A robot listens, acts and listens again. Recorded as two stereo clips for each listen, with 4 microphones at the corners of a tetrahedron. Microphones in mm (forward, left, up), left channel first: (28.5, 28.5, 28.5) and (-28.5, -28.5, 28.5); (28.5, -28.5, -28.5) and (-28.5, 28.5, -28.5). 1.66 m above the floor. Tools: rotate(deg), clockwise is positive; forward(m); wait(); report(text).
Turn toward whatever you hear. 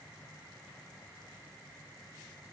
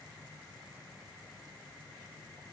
wait()
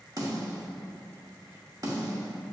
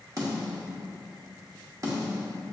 rotate(-180)
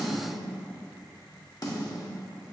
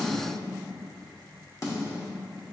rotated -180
report("Facing the snare drum, under 1 m away.")